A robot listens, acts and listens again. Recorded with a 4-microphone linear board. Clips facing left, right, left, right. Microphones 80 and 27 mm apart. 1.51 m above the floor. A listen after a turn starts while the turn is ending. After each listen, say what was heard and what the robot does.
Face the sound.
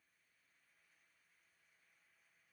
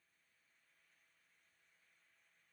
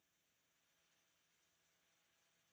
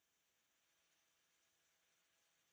Keep listening.
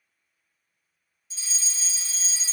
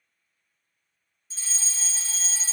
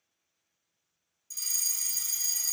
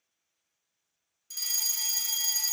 The fire alarm: about 40° right or 140° right. Turn 40° right.
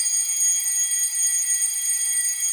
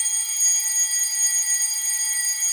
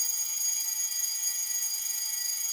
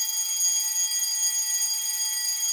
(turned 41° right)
So it is at 95° right. Turn 95° right.
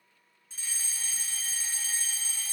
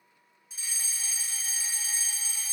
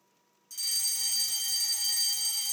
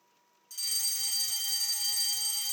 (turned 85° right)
The fire alarm is now 10° right. Turn 10° right.
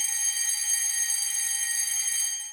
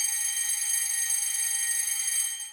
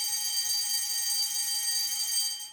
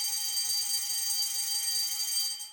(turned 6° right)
Found it: a fire alarm, straight ahead, 1 to 2 m away.